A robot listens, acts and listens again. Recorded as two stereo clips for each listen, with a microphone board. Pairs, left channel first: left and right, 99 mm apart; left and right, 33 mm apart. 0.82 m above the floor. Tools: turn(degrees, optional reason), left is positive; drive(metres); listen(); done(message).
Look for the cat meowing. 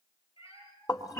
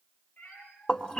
turn(degrees=60, reason="The cat meowing: about 60° left or 120° left.")
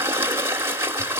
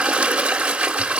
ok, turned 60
listen()
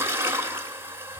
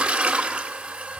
listen()
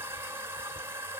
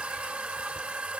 done("I heard a cat meowing, but can't make it out now. It was about straight ahead or 60° left.")